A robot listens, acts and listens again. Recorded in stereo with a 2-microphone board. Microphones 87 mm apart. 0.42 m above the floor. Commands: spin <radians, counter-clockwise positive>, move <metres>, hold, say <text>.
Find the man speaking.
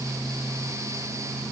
hold
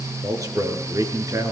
spin -0.70
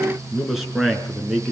say Facing the man speaking, over 4 m away.